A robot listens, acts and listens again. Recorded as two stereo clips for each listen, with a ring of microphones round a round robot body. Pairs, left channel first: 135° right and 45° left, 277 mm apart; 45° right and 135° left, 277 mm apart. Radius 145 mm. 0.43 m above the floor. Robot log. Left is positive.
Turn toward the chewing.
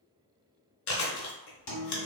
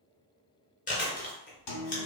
note: The chewing: 110° right.
cmd yaw -110
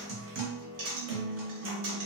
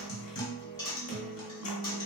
cmd idle
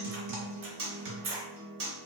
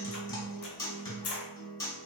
end: Found it: chewing, straight ahead, under 1 m away.